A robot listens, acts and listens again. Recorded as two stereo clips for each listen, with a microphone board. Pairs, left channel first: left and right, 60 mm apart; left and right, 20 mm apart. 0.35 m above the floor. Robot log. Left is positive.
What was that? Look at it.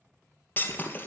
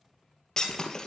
note: The breaking glass: about 35° left or 145° left.
cmd yaw +35
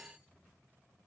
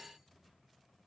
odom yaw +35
cmd idle
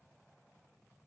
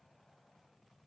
end: I heard breaking glass, but can't make it out now. It was about straight ahead or 110° left.